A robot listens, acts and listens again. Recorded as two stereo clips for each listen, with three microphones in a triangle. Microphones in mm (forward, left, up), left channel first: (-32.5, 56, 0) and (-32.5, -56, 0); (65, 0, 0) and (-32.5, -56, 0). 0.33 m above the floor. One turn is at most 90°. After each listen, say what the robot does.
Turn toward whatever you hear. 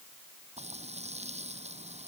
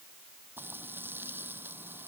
Turn 80° right.
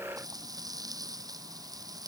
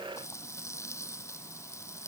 Turn 35° right.
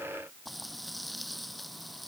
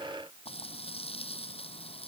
Found it: frying, straight ahead.